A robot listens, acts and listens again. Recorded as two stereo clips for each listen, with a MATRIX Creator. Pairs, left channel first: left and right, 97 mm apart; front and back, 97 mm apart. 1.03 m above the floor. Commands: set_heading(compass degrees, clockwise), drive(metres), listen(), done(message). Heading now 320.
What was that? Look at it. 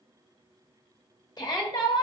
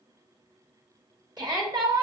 set_heading(185)
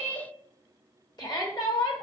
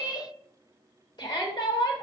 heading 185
set_heading(140)
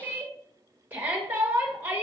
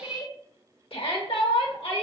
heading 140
set_heading(160)
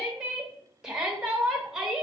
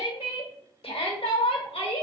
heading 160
done("Facing the shout.")